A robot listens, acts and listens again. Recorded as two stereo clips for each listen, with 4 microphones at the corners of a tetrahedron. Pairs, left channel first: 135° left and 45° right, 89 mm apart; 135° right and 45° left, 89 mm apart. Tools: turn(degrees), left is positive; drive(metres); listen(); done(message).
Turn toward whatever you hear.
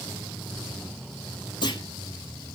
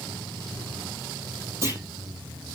turn(degrees=105)
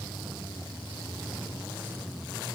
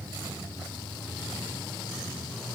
done("Facing where the clunk came from. I can't hear it now.")